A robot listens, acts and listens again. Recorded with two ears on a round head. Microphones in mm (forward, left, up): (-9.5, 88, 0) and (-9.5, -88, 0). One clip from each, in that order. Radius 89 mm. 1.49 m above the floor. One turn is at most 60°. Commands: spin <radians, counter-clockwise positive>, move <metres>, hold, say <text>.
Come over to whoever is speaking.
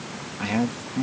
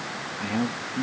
spin 0.61
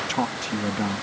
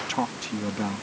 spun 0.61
move 1.0
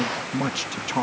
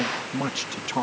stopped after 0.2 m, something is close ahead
say Something is in my way. I am facing the man speaking but have not reached it.